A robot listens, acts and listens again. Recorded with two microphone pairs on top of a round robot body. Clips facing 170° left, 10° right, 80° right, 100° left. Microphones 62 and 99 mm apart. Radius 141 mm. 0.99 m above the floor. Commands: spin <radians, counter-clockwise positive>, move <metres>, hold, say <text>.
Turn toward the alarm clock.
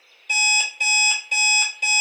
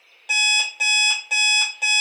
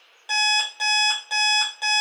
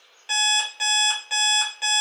spin -0.17
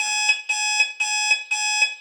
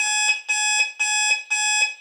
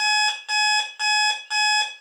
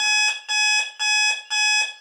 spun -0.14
say Facing the alarm clock, under 1 m away.